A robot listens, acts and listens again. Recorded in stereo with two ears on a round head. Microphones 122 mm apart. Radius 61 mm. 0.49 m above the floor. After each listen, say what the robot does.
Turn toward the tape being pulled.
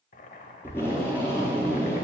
Turn 15° left.
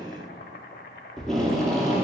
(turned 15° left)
Found it: tape being pulled, straight ahead.